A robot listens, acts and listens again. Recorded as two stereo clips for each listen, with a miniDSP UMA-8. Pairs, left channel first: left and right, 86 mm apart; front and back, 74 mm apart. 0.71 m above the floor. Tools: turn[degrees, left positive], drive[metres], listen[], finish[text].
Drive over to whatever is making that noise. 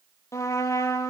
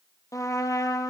Thought: The trumpet: 40° left.
Action: turn[40]
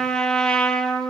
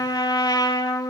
Thought: The trumpet is now 10° left.
Action: turn[10]
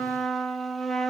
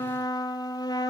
Action: drive[1.0]
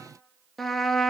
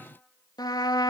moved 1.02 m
Action: drive[1.0]
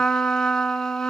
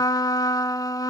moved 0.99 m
Thought: The trumpet is now 10° left.
Action: turn[10]
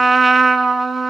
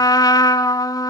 Action: drive[1.0]
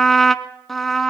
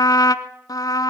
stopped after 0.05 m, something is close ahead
Action: finish[I am next to the trumpet.]